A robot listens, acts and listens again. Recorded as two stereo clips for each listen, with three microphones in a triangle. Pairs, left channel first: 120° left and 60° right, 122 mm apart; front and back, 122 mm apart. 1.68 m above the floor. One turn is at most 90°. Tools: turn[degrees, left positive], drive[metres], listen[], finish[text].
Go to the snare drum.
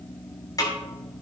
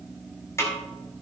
Thought: The snare drum: 65° left.
Action: turn[65]
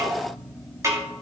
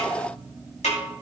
Action: drive[1.0]
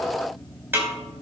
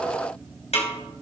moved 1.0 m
Thought: The snare drum is now 10° left.
Action: turn[10]
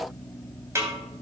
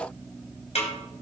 Action: drive[1.0]
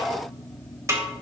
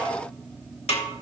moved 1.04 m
Action: drive[1.0]
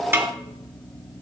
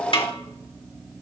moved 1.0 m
Action: drive[1.0]
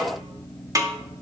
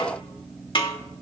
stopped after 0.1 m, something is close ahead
Thought: The snare drum is now 10° right.
Action: turn[-10]
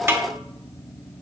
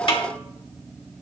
Action: finish[I am next to the snare drum.]